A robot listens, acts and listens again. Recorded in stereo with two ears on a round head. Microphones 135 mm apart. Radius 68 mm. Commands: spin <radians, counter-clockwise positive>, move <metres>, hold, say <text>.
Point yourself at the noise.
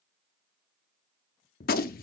spin 1.05
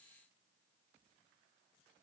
hold
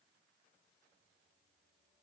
say I heard a gunshot, but can't make it out now. It was about straight ahead or 60° left.